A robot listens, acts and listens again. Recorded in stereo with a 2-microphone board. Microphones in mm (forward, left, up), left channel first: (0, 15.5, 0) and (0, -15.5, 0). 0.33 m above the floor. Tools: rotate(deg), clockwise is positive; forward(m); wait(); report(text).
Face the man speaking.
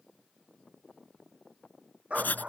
wait()
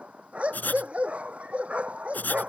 wait()
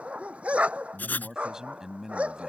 rotate(15)
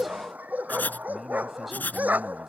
wait()
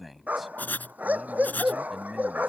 report("Facing the man speaking.")